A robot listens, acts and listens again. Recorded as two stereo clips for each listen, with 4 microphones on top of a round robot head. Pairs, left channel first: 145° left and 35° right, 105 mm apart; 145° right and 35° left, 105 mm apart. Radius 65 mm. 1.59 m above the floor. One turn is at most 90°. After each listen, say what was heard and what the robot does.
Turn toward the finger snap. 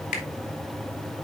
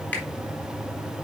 The finger snap: 140° left. Turn 90° left.
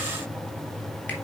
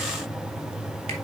Nothing new. It was at 50° left. Turn 50° left.
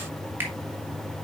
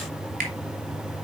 The finger snap is now 35° left. Turn 35° left.
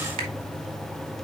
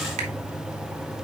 Keep listening.
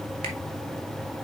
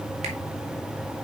Keep listening.
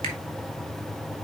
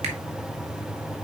I heard a finger snap from this way, but can't make it out now.